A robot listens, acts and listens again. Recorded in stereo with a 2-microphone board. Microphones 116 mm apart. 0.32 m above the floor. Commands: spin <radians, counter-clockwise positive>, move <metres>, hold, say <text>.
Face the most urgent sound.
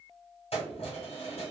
hold
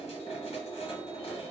hold
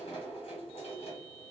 say I can't make out anything urgent to turn to.